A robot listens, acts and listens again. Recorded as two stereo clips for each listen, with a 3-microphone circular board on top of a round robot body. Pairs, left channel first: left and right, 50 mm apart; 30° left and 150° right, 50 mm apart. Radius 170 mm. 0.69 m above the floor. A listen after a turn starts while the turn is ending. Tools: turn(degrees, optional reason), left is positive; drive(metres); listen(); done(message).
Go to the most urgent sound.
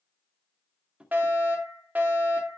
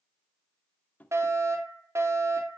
turn(degrees=-145, reason="The fire alarm: 145° right.")
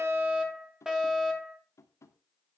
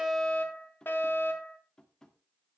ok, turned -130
turn(degrees=-15, reason="The fire alarm is now 15° right.")
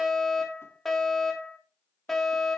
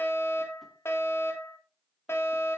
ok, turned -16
drive(metres=1.0)
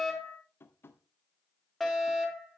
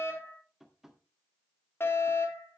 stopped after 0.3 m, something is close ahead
done("Something is in my way. I am facing the fire alarm but have not reached it.")